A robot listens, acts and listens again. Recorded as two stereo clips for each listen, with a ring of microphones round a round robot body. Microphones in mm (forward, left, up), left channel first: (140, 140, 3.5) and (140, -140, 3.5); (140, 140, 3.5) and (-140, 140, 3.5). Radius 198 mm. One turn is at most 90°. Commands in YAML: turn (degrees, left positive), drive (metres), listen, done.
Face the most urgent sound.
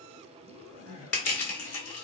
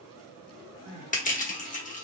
turn: -90
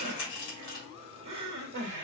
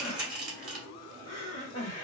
turn: -75
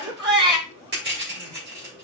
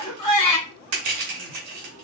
turn: -15
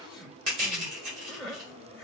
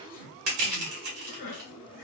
done: "Found it: crying, straight ahead."